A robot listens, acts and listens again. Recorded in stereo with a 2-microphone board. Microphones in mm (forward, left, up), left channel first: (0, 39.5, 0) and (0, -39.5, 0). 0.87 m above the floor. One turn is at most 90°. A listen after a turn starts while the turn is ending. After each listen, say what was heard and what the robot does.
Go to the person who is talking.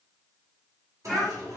Turn 30° left.
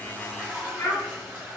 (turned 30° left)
So it is at 145° left. Turn 90° left.
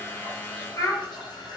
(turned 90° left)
The child speaking is now 45° left. Turn 45° left.
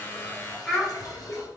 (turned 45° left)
Drive 1.0 m forward.
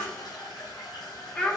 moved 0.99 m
The child speaking is now 10° left. Turn 10° left.
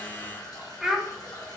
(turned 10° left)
Drive 1.0 m forward.
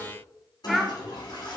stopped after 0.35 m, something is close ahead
I am next to the child speaking.